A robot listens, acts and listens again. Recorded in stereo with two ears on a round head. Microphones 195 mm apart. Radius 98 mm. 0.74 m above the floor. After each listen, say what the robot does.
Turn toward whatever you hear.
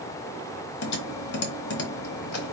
Turn 55° left.
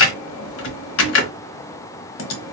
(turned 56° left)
Turn 70° left.
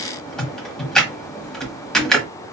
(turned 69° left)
Found it: typing on a keyboard, straight ahead, 1 to 2 m away.